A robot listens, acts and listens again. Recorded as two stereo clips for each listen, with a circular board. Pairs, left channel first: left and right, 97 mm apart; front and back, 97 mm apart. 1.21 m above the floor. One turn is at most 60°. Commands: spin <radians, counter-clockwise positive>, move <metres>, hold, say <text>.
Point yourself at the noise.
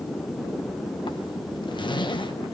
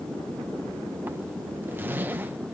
spin 1.05
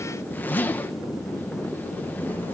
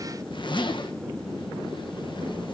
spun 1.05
spin 0.35
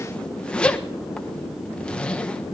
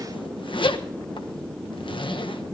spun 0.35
spin 0.17
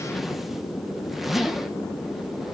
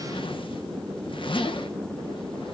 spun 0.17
say Found it: a zipper, straight ahead.